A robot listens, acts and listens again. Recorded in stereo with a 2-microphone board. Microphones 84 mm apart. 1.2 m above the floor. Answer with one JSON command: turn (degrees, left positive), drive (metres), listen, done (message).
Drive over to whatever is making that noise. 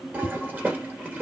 {"turn": -20}
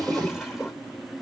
{"drive": 1.0}
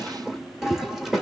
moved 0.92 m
{"drive": 1.0}
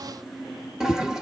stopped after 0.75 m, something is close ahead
{"done": "I am next to the toilet flushing."}